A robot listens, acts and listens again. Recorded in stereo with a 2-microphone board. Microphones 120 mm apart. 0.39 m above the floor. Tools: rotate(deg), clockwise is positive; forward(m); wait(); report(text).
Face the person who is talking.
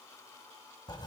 wait()
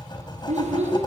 rotate(65)
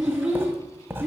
report("Found it: a child speaking, straight ahead, over 4 m away.")